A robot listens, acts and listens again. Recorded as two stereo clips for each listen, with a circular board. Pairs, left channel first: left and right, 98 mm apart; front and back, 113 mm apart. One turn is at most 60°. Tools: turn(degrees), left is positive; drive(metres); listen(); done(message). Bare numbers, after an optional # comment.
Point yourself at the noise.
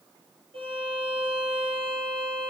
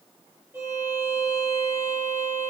# The violin: 110° right.
turn(-60)
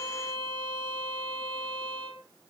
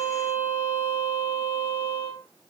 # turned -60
# The violin is now 55° right.
turn(-55)
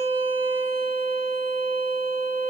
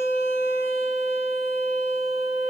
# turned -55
# The violin is now 25° right.
turn(-25)
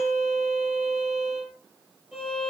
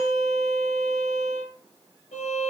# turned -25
done("Found it: a violin, straight ahead.")